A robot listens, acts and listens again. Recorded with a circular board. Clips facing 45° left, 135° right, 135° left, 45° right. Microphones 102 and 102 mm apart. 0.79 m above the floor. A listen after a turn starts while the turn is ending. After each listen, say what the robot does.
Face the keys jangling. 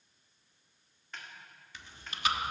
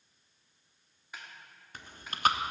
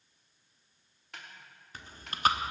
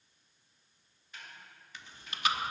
Keep listening.
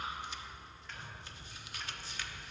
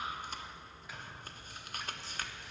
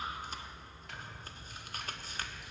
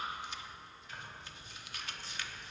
Turn 145° right.
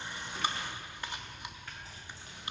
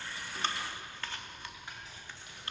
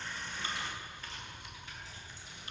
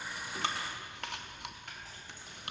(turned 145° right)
Turn 10° right.
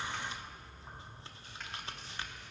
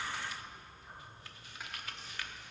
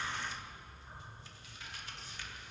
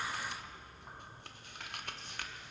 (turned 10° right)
Facing the keys jangling.